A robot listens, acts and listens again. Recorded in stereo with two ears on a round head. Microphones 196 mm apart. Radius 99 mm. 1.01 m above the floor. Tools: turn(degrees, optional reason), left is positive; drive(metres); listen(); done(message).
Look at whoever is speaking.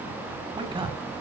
turn(degrees=-25, reason="The man speaking: about 25° right or 155° right.")
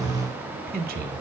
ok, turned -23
turn(degrees=-135, reason="So it is at 135° right.")
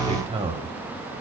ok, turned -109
turn(degrees=-25, reason="The man speaking is now 25° right.")
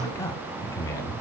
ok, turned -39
turn(degrees=15, reason="The man speaking is now 15° left.")
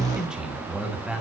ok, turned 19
done("Facing the man speaking.")